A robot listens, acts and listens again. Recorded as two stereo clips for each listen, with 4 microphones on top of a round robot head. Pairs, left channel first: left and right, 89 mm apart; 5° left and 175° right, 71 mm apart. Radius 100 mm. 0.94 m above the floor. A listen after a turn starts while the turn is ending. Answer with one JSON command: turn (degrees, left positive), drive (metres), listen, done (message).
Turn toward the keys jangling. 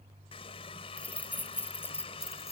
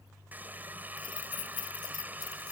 {"turn": 25}
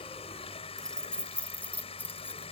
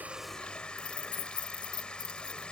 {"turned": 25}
{"turn": 20}
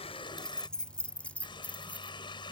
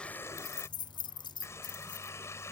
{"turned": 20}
{"turn": 15}
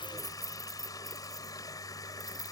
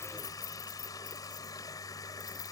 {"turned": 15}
{"done": "Facing the keys jangling."}